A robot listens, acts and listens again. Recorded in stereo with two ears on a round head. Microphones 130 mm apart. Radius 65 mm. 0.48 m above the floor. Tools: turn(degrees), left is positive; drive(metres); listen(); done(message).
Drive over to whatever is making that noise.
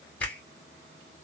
turn(degrees=30)
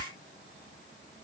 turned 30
listen()
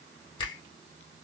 turn(degrees=140)
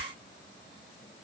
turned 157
turn(degrees=-20)
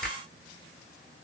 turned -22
drive(metres=1.0)
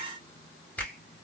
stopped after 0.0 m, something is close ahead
turn(degrees=10)
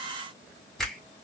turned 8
done("Something is in my way. I am facing the finger snap but have not reached it.")